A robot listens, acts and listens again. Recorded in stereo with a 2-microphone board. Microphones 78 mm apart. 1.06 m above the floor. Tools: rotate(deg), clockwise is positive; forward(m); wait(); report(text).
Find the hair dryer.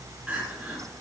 wait()
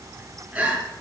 wait()
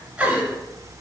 report("I can't make out a hair dryer, only crying.")